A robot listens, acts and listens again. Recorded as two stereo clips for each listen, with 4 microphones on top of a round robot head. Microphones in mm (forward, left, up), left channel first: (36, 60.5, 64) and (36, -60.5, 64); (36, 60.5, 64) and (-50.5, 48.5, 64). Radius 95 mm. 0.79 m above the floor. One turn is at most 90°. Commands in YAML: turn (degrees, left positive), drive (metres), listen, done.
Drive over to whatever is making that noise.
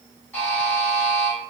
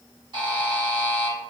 turn: 90
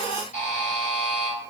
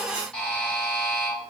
turn: 85
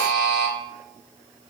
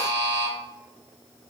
drive: 1.0
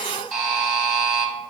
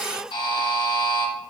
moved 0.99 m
drive: 1.0
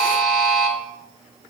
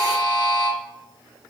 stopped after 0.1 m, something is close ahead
done: "I am next to the buzzer."